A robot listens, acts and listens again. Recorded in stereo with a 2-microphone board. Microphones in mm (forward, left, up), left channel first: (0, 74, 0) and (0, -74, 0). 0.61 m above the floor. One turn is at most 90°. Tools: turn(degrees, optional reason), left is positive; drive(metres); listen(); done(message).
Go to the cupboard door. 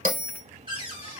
turn(degrees=-35, reason="The cupboard door: about 35° right or 145° right.")
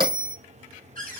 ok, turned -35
turn(degrees=-90, reason="So it is at 110° right.")
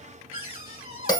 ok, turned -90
turn(degrees=-45, reason="The cupboard door is now 45° right.")
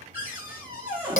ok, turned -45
turn(degrees=-15, reason="The cupboard door is now 15° right.")
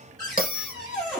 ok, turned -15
drive(metres=1.0)
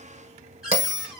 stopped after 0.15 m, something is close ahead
done("Blocked. The cupboard door is further on, straight ahead.")